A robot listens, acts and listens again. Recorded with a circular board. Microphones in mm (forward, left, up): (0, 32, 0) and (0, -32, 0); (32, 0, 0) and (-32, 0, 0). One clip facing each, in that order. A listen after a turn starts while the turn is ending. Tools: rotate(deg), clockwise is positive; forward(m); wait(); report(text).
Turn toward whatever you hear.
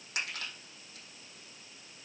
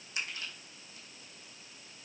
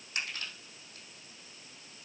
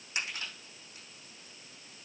rotate(-105)
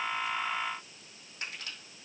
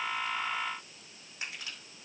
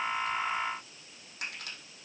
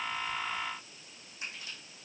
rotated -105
rotate(10)
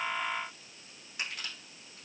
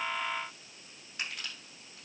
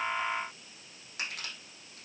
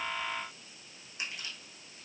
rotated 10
report("Facing the crushing.")